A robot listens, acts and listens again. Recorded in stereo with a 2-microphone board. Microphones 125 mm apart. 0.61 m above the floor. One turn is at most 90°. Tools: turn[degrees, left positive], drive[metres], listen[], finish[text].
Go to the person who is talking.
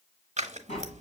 Action: listen[]
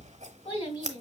Thought: The child speaking: about 45° left or 135° left.
Action: turn[45]
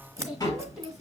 Action: drive[1.0]
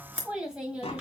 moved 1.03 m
Thought: The child speaking is now 10° right.
Action: turn[-10]
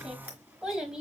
Action: drive[1.0]
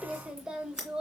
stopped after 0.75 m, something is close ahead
Action: finish[Arrived at the child speaking, straight ahead.]